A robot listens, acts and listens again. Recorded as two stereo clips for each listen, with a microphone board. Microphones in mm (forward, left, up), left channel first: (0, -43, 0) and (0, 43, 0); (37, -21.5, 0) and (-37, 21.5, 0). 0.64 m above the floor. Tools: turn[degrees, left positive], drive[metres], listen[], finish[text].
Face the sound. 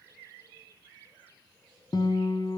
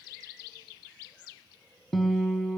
Thought: The guitar: 120° right.
Action: turn[-120]
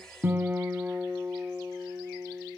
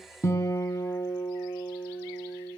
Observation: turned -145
Thought: The guitar is now 25° left.
Action: turn[25]
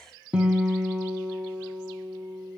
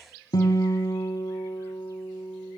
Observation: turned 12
Thought: The guitar is now 10° left.
Action: turn[10]
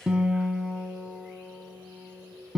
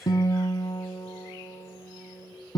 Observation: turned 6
Thought: The guitar is now 10° left.
Action: turn[10]
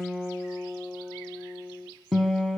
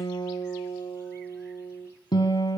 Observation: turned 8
Action: finish[Facing the guitar.]